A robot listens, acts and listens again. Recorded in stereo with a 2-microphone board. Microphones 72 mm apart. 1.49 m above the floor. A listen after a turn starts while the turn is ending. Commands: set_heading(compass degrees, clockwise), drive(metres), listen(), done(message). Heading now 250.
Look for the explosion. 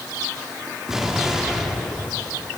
set_heading(280)
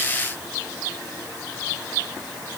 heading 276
listen()
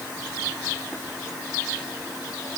done("I heard an explosion, but can't make it out now. It was about 20° left or 145° right.")